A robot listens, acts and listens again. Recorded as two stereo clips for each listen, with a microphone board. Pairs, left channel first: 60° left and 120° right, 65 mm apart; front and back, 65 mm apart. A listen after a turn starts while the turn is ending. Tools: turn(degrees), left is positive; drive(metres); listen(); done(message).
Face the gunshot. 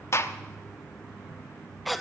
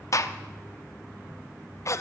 turn(degrees=25)
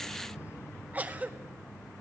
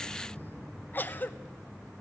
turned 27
done("I heard a gunshot from this way, but can't make it out now.")